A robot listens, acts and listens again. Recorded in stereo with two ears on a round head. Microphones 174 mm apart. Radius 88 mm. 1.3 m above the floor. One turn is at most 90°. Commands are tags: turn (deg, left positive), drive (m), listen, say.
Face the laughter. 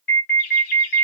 <turn deg="90"/>
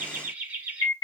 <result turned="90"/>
<turn deg="-10"/>
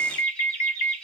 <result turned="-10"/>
<say>Facing the laughter.</say>